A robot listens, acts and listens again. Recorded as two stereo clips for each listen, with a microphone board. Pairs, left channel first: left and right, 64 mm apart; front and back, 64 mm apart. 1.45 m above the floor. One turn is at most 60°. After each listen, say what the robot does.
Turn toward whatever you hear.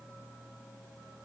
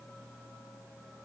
Keep listening.
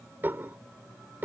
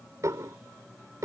Turn 60° right.
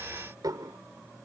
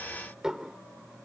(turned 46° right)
Turn 60° right.
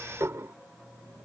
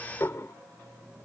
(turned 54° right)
Turn 45° right.
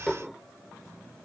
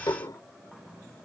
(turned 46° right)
Facing the dishes clattering.